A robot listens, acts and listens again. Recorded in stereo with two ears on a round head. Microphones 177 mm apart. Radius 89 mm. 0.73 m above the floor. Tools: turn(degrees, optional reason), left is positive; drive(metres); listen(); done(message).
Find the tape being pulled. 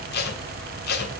turn(degrees=55, reason="The tape being pulled: about 55° left or 125° left.")
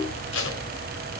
listen()
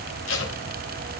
turn(degrees=65, reason="So it is at 65° left.")
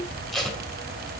done("Facing the tape being pulled.")